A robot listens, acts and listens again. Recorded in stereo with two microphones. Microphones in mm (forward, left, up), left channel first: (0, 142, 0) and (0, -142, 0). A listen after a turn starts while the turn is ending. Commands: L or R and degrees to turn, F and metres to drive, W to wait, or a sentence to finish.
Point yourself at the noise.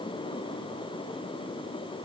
W
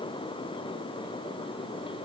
W
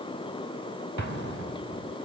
R90
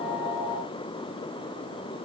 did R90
I heard an explosion from this way, but can't make it out now.